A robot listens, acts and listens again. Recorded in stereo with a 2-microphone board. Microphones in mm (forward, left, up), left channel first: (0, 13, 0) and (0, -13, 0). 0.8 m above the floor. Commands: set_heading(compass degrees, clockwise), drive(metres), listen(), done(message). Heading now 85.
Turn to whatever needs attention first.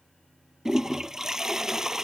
listen()
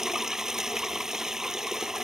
listen()
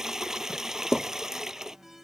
set_heading(115)
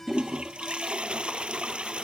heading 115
set_heading(100)
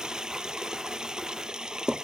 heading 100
listen()
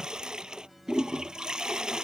done("Facing the alarm.")